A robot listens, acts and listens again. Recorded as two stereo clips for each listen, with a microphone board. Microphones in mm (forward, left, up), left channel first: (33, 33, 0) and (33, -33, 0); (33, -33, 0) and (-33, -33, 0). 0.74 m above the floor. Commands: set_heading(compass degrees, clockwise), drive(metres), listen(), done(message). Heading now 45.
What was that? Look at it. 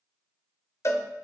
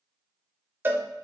set_heading(275)
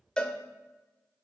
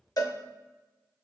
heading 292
set_heading(277)
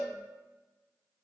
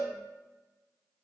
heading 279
done("Found it: a cowbell, straight ahead, under 1 m away.")